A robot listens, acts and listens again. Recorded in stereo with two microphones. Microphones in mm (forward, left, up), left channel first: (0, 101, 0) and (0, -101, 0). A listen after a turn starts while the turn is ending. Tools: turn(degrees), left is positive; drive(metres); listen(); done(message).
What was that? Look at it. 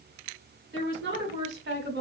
turn(degrees=-65)
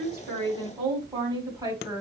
turn(degrees=-15)
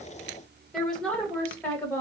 turn(degrees=10)
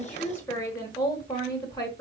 turn(degrees=20)
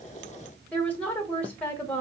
turn(degrees=10)
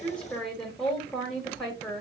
done("Facing the woman speaking.")